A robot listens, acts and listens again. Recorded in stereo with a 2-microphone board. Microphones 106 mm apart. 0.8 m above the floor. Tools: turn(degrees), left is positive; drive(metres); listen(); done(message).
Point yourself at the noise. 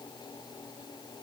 listen()
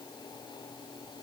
listen()
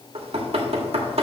turn(degrees=-70)
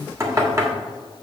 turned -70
turn(degrees=-30)
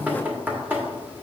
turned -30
turn(degrees=-15)
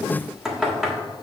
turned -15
done("Found it: knocking, straight ahead.")